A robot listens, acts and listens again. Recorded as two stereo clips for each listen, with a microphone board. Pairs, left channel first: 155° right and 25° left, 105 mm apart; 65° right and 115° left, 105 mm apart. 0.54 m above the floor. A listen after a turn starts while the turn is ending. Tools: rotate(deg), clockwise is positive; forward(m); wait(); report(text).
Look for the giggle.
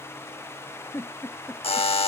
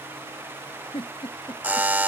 rotate(90)
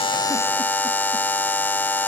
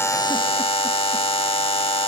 wait()
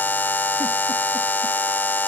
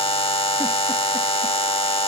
wait()
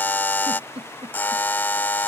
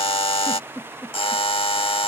report("Facing the giggle.")